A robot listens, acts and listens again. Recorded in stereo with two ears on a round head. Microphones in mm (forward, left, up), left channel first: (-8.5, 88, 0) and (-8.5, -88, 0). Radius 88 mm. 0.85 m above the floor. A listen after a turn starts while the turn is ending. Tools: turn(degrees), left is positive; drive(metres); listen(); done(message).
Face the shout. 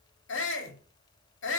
turn(degrees=65)
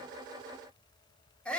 done("Facing the shout.")